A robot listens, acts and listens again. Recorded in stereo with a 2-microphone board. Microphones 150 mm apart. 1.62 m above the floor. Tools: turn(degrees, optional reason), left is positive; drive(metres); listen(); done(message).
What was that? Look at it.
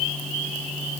listen()
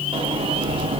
turn(degrees=-35, reason="The sliding door: about 35° right or 145° right.")
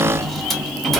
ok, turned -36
done("Found it: a sliding door, straight ahead, under 1 m away.")